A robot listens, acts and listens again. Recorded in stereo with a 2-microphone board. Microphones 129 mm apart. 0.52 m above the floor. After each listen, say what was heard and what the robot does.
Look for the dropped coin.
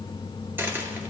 The dropped coin: about 15° right or 165° right. Turn 15° right.
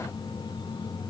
Keep listening.
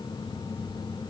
I heard a dropped coin, but can't make it out now. It was about straight ahead or 150° right.